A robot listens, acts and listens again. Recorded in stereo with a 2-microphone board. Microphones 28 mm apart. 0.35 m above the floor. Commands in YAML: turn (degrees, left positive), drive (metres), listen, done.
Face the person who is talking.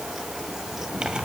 listen: true
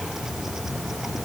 listen: true
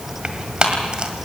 done: "I can't make out anyone speaking to turn to."